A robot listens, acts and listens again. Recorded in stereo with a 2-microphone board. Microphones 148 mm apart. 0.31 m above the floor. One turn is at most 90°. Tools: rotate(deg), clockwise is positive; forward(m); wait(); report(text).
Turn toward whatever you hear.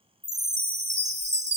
rotate(50)
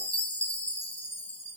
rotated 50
rotate(70)
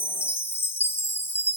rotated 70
rotate(-20)
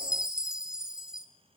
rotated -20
report("Found it: a chime, straight ahead, under 1 m away.")